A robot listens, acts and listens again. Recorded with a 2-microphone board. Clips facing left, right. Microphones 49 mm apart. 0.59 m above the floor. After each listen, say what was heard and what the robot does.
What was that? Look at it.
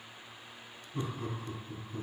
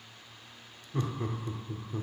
The laughter: about 50° right or 130° right. Turn 50° right.
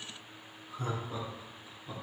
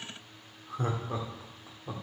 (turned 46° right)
So it is at 70° right. Turn 70° right.
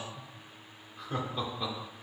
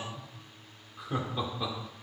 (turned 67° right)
Found it: laughter, straight ahead, 1 to 2 m away.